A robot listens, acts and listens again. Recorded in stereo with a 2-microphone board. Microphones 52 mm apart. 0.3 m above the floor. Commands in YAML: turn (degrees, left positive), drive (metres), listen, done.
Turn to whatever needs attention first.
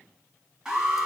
turn: -15
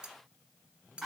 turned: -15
done: "Facing the alarm."